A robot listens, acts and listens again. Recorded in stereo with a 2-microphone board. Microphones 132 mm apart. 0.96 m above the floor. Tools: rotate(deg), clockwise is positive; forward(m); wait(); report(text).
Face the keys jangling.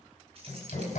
wait()
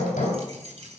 rotate(55)
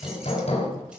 wait()
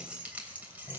rotate(15)
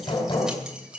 rotate(10)
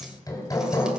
wait()
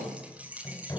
rotate(10)
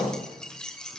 report("Facing the keys jangling, 2 to 4 m away.")